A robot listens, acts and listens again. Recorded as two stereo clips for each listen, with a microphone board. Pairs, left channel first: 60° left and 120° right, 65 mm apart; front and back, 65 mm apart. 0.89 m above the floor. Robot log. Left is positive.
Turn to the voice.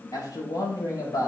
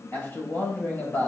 note: The man speaking: 60° left.
cmd yaw +60
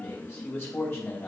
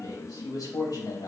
end: Facing the man speaking.